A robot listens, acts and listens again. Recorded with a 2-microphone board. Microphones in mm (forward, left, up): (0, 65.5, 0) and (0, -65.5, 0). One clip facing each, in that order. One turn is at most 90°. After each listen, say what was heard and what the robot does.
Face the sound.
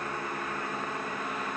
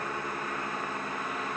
Keep listening.
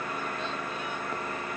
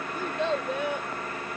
Turn 90° right.
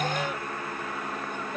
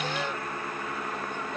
So it is at 15° left. Turn 15° left.
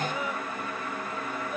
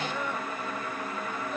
Keep listening.
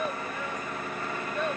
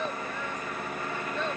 The child speaking is now 10° left. Turn 10° left.
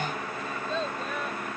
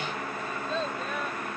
Facing the child speaking.